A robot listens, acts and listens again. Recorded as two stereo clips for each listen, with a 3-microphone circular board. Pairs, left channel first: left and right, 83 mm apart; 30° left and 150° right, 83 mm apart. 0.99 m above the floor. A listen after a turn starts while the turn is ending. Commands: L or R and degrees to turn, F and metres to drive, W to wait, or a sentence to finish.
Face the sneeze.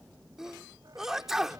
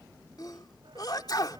Facing the sneeze.